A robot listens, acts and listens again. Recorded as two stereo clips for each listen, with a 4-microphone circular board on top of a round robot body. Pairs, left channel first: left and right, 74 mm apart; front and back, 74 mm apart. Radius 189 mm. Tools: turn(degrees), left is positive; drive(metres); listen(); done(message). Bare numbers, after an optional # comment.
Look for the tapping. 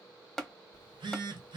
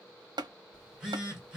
# The tapping: 175° left.
turn(175)
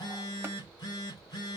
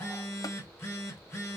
listen()
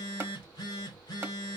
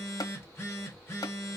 # The tapping is now 30° right.
turn(-30)
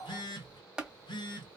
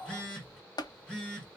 # The tapping is now 10° right.
turn(-10)
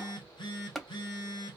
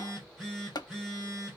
done("Facing the tapping, 1 to 2 m away.")